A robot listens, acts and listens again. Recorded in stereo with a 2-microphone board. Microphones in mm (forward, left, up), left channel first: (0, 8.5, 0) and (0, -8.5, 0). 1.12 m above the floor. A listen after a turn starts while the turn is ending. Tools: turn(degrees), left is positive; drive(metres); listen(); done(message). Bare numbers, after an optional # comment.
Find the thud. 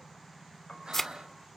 # The thud: about 30° left or 150° left.
turn(30)
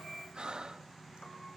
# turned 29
listen()
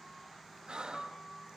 done("I heard a thud, but can't make it out now. It was about straight ahead or 120° left.")